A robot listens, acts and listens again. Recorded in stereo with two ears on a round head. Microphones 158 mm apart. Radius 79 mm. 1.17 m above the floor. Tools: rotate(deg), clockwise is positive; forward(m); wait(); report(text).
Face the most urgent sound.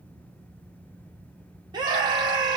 rotate(25)
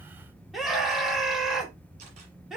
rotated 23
report("Facing the scream.")